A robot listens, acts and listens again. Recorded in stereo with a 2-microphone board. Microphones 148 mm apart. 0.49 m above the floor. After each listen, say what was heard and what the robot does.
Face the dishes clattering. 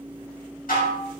Turn 90° left.
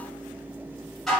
Found it: dishes clattering, straight ahead, 2 to 4 m away.